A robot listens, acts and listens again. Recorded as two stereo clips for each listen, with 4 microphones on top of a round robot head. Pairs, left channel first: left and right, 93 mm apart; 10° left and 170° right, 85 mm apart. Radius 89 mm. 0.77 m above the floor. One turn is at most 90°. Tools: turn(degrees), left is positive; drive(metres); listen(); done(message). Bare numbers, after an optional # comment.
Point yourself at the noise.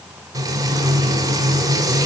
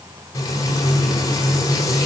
# The frying: 40° right.
turn(-40)
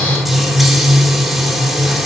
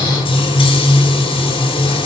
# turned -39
done("Facing the frying, over 4 m away.")